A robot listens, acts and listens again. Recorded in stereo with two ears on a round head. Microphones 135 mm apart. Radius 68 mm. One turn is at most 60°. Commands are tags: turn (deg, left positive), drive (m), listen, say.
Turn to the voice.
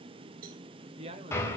<turn deg="-40"/>
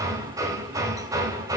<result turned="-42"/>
<listen/>
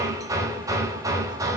<listen/>
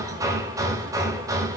<say>I heard a man speaking, but can't make it out now. It was about straight ahead or 100° right.</say>